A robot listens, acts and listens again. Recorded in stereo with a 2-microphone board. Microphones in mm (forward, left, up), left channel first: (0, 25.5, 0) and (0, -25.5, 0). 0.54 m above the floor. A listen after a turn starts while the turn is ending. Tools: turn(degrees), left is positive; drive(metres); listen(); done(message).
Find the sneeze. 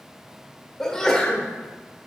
turn(degrees=30)
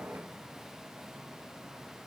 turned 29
listen()
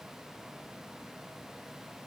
done("I heard a sneeze, but can't make it out now. It was about 20° right or 140° left.")